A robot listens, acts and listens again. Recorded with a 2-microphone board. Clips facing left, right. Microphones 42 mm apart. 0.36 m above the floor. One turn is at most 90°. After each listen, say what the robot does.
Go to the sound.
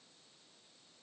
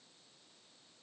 Keep listening.
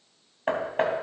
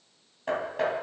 Turn 40° left.
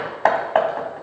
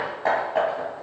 Turn 90° left.
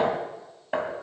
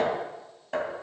Turn 25° left.
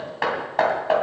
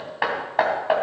Turn 10° right.
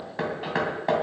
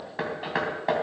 Drive 1.0 m forward.
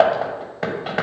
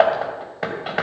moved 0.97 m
Drive 1.0 m forward.
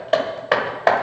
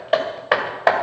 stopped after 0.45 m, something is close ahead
Turn 15° right.
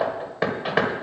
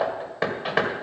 Arrived at the hammering, straight ahead.